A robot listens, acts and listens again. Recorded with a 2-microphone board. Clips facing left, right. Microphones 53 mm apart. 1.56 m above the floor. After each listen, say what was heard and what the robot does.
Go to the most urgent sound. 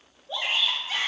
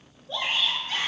Turn 30° left.
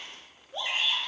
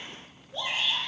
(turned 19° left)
So it is at 150° left. Turn 150° left.
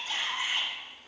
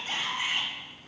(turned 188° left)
The shout is now 35° right. Turn 35° right.
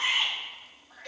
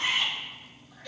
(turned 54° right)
The shout is now 15° left. Turn 15° left.
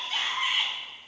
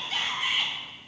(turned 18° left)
Drive 1.0 m forward.
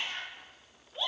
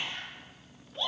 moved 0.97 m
Drive 1.0 m forward.
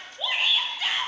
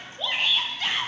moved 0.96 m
Drive 1.0 m forward.
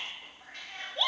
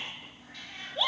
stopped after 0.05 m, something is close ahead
I am next to the shout.